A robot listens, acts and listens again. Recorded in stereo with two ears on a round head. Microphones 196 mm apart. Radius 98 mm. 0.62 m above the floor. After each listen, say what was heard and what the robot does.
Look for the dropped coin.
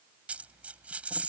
Turn 30° right.
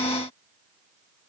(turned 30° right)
Keep listening.
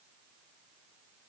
I heard a dropped coin, but can't make it out now. It was about 25° left or 145° right.